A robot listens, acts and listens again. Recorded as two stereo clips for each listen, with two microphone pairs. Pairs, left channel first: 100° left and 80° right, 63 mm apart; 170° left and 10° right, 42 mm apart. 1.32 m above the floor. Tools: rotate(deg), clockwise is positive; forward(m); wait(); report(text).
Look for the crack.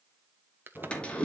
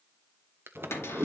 rotate(25)
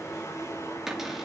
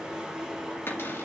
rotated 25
report("Facing where the crack came from. I can't hear it now.")